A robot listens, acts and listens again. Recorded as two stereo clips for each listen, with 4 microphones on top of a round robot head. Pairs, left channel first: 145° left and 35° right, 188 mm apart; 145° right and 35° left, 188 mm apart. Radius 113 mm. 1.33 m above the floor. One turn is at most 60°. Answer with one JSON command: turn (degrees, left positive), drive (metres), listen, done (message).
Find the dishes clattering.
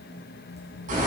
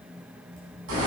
{"listen": true}
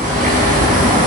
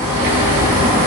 {"listen": true}
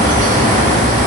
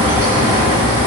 {"done": "I can't make out dishes clattering to turn to."}